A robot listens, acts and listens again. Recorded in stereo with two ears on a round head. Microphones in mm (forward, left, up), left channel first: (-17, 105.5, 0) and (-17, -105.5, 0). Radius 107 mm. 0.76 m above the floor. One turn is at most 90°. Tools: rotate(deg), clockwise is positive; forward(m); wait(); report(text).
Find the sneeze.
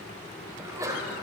rotate(30)
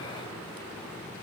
wait()
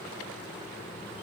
report("I heard a sneeze, but can't make it out now. It was about 15° left or 135° right.")